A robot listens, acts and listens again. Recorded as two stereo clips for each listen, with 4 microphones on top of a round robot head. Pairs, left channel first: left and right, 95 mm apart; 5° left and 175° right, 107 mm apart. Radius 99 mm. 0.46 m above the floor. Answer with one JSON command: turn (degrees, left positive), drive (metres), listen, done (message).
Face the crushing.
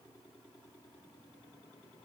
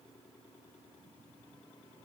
{"listen": true}
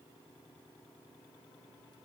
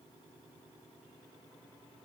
{"listen": true}
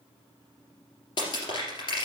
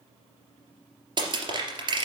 {"turn": 140}
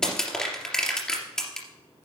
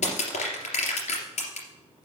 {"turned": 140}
{"done": "Facing the crushing, 2 to 4 m away."}